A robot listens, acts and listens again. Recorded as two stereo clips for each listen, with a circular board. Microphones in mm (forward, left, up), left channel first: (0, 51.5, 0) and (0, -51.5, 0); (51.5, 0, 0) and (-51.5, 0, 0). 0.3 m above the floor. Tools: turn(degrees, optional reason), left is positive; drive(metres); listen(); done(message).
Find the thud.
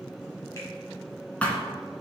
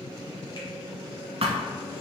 turn(degrees=165, reason="The thud: 165° left.")
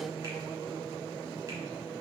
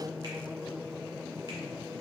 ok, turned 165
done("Facing where the thud came from. I can't hear it now.")